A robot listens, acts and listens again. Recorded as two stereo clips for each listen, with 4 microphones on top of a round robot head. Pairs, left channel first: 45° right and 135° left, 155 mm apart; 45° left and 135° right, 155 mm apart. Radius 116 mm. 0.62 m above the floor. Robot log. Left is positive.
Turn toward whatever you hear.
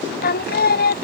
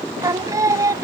note: The singing: 65° right.
cmd yaw -65
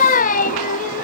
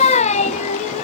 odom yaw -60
end: Found it: singing, straight ahead.